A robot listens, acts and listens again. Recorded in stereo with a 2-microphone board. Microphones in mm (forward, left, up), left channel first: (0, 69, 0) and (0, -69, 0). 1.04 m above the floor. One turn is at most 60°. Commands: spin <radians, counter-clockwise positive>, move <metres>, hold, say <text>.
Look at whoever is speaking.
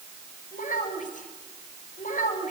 spin 1.05
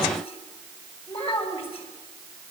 spin 0.79
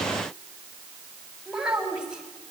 say Facing the child speaking, over 4 m away.